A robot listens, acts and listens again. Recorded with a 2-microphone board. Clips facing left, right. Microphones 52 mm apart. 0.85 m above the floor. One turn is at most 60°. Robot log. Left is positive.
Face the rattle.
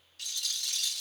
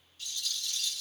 note: The rattle: about 70° left or 110° left.
cmd yaw +60
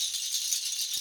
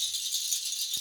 note: So it is at 50° left.
cmd yaw +50
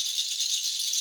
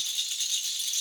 note: The rattle is now 20° right.
cmd yaw -20
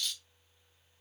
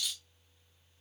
end: Found it: a rattle, straight ahead.